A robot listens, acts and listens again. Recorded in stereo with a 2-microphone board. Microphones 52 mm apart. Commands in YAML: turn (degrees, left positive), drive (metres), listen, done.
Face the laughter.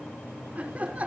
turn: -30
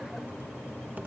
listen: true
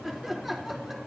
done: "Found it: laughter, straight ahead."